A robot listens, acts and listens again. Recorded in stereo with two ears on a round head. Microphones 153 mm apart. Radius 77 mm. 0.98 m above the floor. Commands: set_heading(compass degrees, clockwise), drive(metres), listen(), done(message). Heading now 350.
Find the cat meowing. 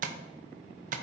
listen()
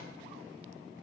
listen()
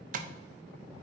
done("I can't make out a cat meowing to turn to.")